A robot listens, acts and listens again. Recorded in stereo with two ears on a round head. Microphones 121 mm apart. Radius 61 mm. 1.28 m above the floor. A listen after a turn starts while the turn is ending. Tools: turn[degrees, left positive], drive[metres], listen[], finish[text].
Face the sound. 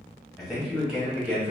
Action: turn[-30]
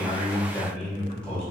Action: finish[Found it: a man speaking, straight ahead, 2 to 4 m away.]